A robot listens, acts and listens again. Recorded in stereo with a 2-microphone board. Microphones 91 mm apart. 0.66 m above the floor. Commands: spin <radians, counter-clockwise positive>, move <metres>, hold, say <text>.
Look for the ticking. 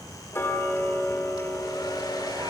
spin 0.52
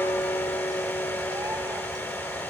spin 2.09
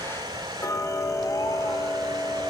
spin 0.70
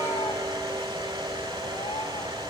hold
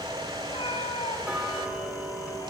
spin -0.26
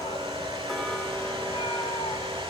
say Found it: ticking, straight ahead, 2 to 4 m away.